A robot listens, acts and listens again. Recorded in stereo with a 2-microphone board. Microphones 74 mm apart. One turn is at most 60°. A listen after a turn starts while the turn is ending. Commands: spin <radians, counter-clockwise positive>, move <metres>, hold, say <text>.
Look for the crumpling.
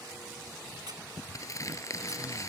spin 0.79
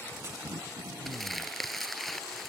say Found it: crumpling, straight ahead.